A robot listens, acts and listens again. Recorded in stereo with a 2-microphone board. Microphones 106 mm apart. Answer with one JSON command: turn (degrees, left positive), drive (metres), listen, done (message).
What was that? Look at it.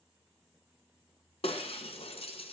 {"turn": 65}
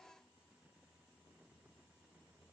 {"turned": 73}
{"listen": true}
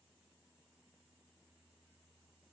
{"done": "I heard breaking glass, but can't make it out now. It was about 10° right or 45° left."}